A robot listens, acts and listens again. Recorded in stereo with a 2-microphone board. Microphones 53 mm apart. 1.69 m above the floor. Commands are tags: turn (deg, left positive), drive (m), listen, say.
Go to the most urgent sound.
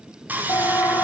<turn deg="90"/>
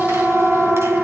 <turn deg="-10"/>
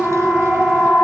<drive m="1.0"/>
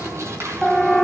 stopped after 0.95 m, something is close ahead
<turn deg="10"/>
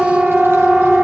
<say>Arrived at the siren, straight ahead.</say>